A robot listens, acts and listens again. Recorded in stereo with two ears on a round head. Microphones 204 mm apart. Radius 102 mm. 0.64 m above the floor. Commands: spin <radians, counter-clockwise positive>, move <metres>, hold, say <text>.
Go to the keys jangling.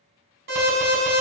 hold
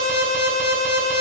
hold
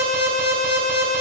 say I can't make out keys jangling to turn to.